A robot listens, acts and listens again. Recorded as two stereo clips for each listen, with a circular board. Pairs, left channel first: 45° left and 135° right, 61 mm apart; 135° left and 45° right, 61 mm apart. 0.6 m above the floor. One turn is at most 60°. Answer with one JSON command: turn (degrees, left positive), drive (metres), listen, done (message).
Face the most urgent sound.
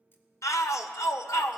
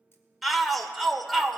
{"turn": 45}
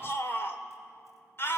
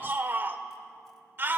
{"done": "Facing the shout, 1 to 2 m away."}